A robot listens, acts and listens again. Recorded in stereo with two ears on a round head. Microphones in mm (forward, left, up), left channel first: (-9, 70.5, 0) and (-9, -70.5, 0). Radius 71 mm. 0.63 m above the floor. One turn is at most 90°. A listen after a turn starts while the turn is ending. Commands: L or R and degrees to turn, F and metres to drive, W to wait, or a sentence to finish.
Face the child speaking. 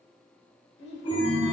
L90
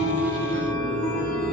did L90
W
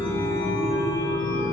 W
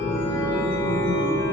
I heard a child speaking from this way, but can't make it out now.